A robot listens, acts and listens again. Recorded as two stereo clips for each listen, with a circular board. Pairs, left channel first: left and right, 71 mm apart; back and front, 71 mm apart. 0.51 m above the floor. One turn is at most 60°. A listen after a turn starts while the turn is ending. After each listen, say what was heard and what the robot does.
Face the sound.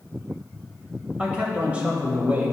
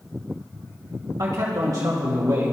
The man speaking: 30° right. Turn 30° right.
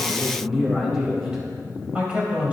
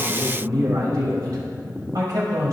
The man speaking is now 25° right. Turn 25° right.
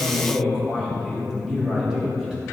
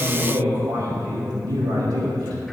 The man speaking is now 10° right. Turn 10° right.
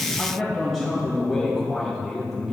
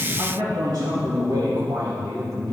Facing the man speaking.